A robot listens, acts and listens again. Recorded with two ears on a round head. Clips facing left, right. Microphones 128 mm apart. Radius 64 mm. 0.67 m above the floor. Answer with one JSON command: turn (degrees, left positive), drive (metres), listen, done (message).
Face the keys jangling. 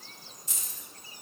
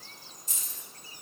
{"turn": 50}
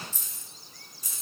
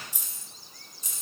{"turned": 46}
{"turn": -25}
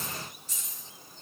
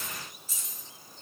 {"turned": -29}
{"done": "Facing the keys jangling, 1 to 2 m away."}